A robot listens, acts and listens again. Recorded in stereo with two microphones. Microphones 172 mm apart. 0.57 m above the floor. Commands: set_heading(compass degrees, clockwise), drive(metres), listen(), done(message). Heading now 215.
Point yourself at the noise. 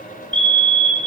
set_heading(245)
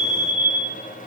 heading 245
set_heading(5)
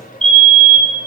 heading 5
set_heading(40)
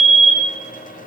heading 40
done("Facing the fire alarm, over 4 m away.")